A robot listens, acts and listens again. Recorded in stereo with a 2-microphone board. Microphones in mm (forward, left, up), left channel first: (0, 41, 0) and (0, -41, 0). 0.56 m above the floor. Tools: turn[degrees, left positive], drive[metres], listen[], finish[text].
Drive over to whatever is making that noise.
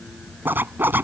Thought: The zipper: about 25° right or 155° right.
Action: turn[-25]
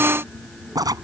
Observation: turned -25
Thought: So it is at 130° right.
Action: turn[-130]
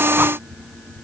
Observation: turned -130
Action: listen[]
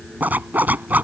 Thought: The zipper is now 20° right.
Action: turn[-20]
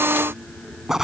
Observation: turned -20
Action: drive[1.0]
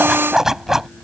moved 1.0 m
Action: drive[1.0]
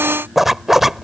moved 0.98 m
Action: drive[1.0]
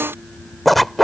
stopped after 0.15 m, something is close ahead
Action: finish[I am next to the zipper.]